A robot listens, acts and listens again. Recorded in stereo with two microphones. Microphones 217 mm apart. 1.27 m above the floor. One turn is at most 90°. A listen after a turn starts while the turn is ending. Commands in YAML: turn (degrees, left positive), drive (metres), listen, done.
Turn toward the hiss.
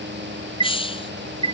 turn: 25
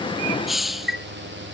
done: "Found it: a hiss, straight ahead."